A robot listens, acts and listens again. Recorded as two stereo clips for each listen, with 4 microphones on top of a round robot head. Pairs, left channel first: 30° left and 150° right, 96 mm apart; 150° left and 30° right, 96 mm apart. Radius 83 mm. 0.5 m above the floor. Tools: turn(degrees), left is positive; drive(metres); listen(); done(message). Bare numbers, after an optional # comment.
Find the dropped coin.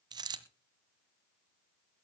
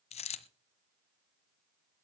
# The dropped coin: 165° left.
turn(165)
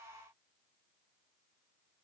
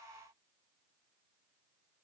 done("I heard a dropped coin from this way, but can't make it out now.")